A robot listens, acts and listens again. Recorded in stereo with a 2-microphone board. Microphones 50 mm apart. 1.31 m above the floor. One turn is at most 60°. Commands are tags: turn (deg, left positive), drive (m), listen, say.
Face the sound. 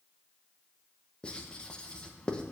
<turn deg="20"/>
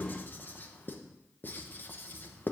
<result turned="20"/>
<turn deg="60"/>
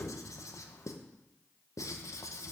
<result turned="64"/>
<turn deg="60"/>
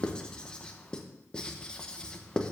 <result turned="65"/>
<turn deg="15"/>
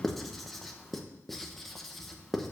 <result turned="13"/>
<say>Found it: writing, straight ahead.</say>